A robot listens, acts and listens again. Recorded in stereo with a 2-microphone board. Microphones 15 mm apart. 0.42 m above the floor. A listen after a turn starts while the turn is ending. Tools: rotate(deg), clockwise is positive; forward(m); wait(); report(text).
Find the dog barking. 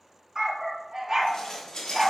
rotate(30)
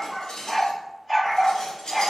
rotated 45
rotate(-15)
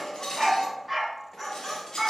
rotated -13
report("Facing the dog barking.")